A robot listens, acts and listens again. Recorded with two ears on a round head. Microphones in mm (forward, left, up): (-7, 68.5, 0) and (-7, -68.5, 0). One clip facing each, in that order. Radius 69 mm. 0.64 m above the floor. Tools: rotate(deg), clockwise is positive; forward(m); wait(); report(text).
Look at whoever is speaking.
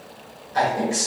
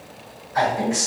rotate(-40)
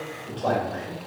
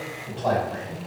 rotate(-90)
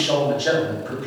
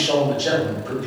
rotate(20)
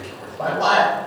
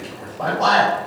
report("Facing the man speaking.")